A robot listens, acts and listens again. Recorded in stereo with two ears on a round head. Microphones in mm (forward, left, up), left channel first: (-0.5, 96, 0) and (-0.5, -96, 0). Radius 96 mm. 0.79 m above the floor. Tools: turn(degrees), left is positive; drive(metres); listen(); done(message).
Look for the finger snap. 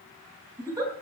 listen()
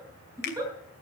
turn(degrees=50)
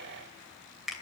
done("Facing the finger snap.")